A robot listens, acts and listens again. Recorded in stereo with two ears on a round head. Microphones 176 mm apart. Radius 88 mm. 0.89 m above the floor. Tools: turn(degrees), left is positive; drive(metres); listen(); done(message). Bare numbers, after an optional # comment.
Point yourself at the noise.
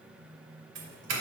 # The doorbell: about 65° right or 115° right.
turn(-65)
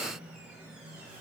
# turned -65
listen()
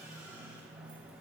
listen()
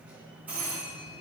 # So it is at 10° right.
turn(-10)
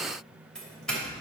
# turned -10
done("Facing the doorbell, 2 to 4 m away.")